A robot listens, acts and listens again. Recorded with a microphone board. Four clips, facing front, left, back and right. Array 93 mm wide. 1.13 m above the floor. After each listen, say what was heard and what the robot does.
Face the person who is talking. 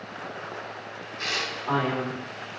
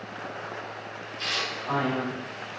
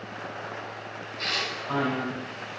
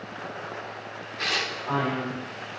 Found it: a man speaking, straight ahead, 2 to 4 m away.